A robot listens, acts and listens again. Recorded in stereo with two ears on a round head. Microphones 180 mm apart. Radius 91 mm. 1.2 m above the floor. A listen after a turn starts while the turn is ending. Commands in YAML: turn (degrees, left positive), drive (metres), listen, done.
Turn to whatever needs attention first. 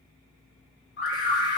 turn: 55
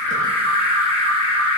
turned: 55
turn: 70
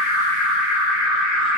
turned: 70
done: "Facing the alarm."